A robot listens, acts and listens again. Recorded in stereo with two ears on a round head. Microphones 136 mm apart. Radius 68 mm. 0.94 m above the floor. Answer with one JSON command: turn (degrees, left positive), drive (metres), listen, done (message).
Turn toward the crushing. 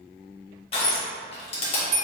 {"turn": 40}
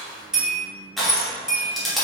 {"done": "Found it: crushing, straight ahead, 1 to 2 m away."}